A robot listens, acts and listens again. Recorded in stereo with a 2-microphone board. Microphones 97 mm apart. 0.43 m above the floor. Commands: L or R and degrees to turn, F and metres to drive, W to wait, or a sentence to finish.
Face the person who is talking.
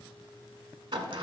W
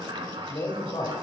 L55
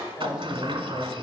L55
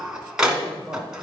Facing the man speaking, 2 to 4 m away.